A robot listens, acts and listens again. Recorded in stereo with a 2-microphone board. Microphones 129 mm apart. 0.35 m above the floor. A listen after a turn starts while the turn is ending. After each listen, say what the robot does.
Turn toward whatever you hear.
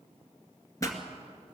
Turn 25° left.
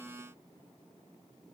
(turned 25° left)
Keep listening.
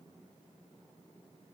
I heard a pop, but can't make it out now. It was about straight ahead or 130° left.